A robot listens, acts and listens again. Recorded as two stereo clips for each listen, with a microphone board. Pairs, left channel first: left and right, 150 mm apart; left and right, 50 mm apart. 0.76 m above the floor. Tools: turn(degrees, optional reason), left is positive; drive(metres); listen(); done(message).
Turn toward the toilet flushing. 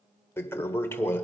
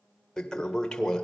turn(degrees=15, reason="The toilet flushing: about 15° left or 165° left.")
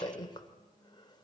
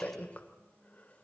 turn(degrees=150, reason="So it is at 150° left.")
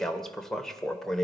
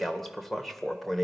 done("Facing the toilet flushing, 1 to 2 m away.")